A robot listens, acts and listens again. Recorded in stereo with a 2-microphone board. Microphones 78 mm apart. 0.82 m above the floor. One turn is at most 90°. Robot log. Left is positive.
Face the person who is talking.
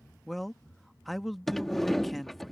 cmd yaw +30
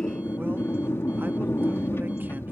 cmd idle
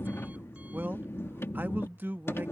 note: So it is at 30° right.
cmd yaw -30
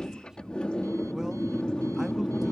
cmd idle
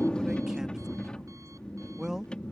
note: The man speaking is now 10° right.
cmd yaw -10
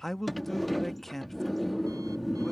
end: Found it: a man speaking, straight ahead.